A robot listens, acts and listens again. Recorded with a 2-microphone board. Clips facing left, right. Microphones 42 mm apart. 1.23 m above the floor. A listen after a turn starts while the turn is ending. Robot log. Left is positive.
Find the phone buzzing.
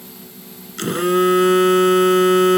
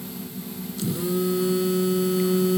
note: The phone buzzing: about 65° left or 115° left.
cmd yaw +65
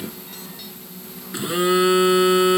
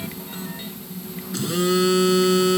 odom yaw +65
note: So it is at 25° left.
cmd yaw +25
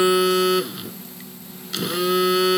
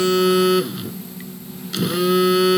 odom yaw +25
end: Found it: a phone buzzing, straight ahead.